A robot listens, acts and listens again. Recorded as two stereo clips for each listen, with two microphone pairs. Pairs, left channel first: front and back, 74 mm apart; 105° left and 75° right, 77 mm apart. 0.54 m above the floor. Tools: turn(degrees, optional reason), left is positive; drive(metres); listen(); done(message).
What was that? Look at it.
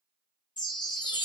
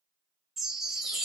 done("Facing the chime, 1 to 2 m away.")